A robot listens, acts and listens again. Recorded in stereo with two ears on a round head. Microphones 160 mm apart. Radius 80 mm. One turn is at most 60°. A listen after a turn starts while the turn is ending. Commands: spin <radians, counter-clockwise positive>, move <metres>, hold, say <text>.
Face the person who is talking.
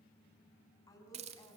spin 0.35
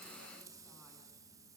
hold
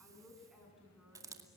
say Found it: a woman speaking, straight ahead, over 4 m away.